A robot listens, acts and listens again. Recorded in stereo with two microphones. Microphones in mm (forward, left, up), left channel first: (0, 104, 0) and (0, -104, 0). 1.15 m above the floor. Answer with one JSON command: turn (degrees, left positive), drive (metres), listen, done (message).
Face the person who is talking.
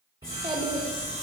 {"turn": -30}
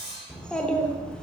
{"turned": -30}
{"done": "Facing the child speaking."}